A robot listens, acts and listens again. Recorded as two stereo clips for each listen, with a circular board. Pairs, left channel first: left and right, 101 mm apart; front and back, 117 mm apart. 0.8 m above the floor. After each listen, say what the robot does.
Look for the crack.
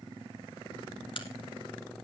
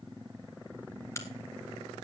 Turn 65° left.
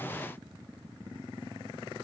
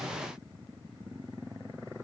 Facing where the crack came from. I can't hear it now.